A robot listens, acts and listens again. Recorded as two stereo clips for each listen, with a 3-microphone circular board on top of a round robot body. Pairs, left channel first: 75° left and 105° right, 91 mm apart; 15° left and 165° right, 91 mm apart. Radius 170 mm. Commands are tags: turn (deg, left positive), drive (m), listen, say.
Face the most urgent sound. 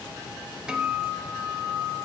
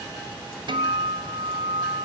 <listen/>
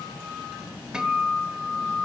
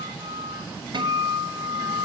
<listen/>
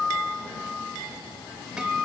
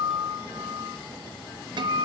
<say>I can't make out anything urgent to turn to.</say>